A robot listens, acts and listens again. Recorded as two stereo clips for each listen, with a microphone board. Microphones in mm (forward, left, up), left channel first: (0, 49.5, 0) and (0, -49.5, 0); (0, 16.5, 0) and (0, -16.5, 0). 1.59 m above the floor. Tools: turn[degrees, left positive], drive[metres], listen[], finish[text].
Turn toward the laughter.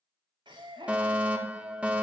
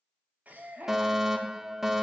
Thought: The laughter: about 50° right or 130° right.
Action: turn[-50]
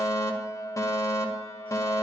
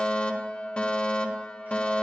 Action: listen[]
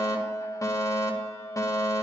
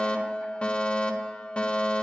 Action: listen[]
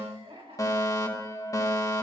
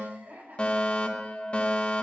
Thought: So it is at 90° right.
Action: turn[-90]
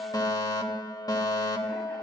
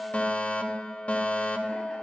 Action: listen[]
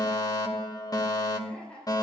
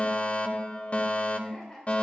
Thought: The laughter is now 10° left.
Action: turn[10]
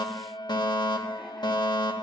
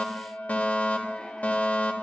Action: listen[]
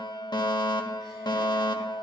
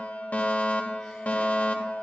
Action: listen[]
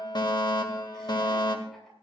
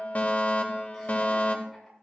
Action: finish[I heard laughter from this way, but can't make it out now.]